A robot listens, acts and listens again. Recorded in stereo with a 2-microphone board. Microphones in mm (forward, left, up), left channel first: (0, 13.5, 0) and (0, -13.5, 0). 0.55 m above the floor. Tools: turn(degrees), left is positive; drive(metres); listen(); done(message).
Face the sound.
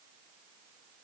listen()
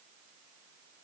listen()
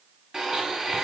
turn(degrees=-25)
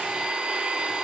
turn(degrees=-130)
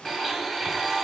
done("Facing the blender.")